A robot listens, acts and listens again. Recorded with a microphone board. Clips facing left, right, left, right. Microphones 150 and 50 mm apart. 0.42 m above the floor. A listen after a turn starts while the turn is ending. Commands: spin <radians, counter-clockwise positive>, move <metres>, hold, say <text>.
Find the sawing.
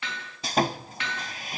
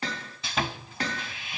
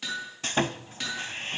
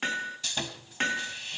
spin 0.70
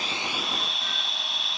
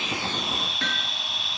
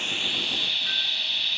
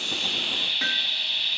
say Facing the sawing.